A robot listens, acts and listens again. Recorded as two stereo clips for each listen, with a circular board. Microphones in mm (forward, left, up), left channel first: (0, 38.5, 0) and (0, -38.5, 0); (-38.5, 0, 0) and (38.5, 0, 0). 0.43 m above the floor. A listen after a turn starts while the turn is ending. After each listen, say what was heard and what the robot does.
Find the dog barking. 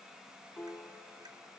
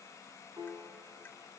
Keep listening.
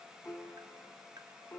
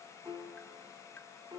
Keep listening.
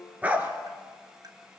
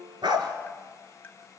The dog barking: 20° right. Turn 20° right.
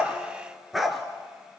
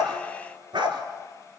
Found it: a dog barking, straight ahead.